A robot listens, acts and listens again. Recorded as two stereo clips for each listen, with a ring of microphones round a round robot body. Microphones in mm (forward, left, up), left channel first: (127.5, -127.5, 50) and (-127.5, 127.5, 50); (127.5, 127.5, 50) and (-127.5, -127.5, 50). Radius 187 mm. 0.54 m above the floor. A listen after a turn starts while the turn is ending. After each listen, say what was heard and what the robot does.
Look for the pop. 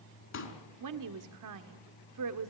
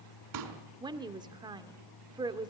The pop: 100° right. Turn 100° right.
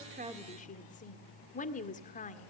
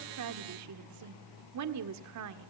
Facing where the pop came from. I can't hear it now.